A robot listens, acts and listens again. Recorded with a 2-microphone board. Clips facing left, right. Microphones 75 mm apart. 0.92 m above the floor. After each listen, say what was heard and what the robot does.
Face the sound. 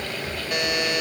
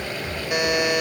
Turn 30° right.
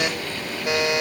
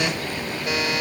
So it is at 20° left. Turn 20° left.
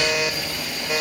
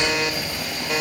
Facing the buzzer.